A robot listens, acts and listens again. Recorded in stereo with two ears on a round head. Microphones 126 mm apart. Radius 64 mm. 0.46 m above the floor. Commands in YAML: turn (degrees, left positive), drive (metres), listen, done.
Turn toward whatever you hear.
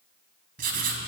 turn: -70
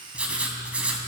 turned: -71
turn: -10
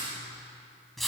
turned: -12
done: "Found it: writing, straight ahead."